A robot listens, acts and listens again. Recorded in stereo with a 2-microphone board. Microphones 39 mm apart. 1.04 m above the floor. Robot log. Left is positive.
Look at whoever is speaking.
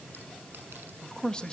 note: The man speaking: about 25° left or 155° left.
cmd yaw +25
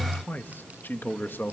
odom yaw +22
note: So it is at 115° left.
cmd yaw +115
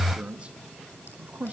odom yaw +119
note: The man speaking is now 40° right.
cmd yaw -40
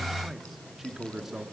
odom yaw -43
note: The man speaking is now 15° right.
cmd yaw -15
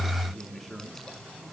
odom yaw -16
end: Facing the man speaking, 2 to 4 m away.